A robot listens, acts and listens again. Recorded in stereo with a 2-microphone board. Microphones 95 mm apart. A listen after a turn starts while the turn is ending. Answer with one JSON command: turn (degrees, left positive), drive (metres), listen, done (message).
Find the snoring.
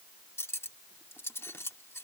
{"listen": true}
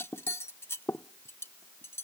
{"listen": true}
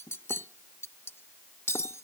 {"done": "I can't make out snoring to turn to."}